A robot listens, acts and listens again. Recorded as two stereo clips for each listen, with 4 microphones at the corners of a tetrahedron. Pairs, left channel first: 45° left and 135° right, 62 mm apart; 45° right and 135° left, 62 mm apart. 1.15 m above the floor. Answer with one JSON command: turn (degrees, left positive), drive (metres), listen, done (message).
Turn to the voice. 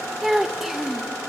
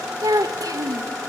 {"turn": 140}
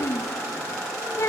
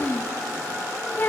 {"turn": 10}
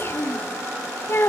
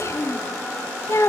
{"done": "Facing the child speaking."}